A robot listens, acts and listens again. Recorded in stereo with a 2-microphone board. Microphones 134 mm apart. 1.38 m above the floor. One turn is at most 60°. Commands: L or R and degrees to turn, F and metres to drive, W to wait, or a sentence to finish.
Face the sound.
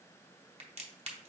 R50
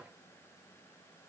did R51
W
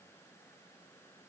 I heard a crack, but can't make it out now. It was about 5° left or 80° right.